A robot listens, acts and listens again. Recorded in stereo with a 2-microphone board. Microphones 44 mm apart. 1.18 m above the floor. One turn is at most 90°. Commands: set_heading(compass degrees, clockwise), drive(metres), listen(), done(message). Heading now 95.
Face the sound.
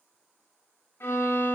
set_heading(30)
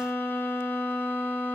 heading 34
set_heading(339)
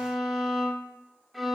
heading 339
done("Found it: a violin, straight ahead.")